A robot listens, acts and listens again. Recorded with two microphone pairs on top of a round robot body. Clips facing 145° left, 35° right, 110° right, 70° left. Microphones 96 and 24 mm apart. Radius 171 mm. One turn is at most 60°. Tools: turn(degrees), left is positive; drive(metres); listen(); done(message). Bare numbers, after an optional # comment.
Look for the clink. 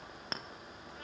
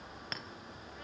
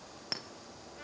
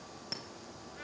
# The clink: 165° right.
turn(-60)
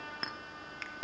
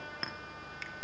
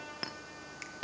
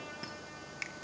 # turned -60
# The clink is now 135° right.
turn(-60)
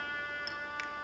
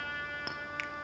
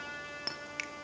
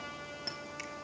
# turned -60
# Nothing new. It was at 75° right.
turn(-60)
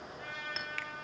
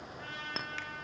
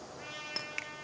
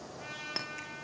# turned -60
# Nothing new. It was at 15° right.
turn(-15)
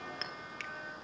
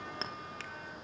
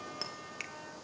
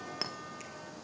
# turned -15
# The clink is now 20° left.
turn(20)
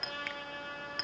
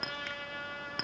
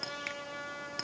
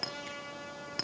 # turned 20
done("Found it: a clink, straight ahead, 1 to 2 m away.")